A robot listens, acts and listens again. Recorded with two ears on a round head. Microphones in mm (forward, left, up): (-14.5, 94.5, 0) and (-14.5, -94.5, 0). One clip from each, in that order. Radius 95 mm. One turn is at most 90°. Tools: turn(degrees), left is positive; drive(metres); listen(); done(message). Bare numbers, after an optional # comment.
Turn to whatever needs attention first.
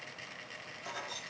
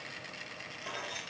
listen()
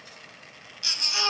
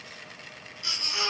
# The baby crying: about 55° left or 125° left.
turn(55)
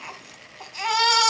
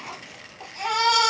# So it is at 65° left.
turn(65)
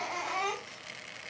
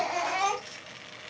# The baby crying is now 10° right.
turn(-10)
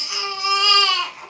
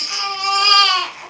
done("Found it: a baby crying, straight ahead, 1 to 2 m away.")